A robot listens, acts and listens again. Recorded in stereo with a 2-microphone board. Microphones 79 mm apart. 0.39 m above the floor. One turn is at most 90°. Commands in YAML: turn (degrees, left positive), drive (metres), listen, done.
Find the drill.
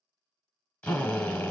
turn: 15
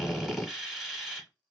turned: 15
done: "Found it: a drill, straight ahead, under 1 m away."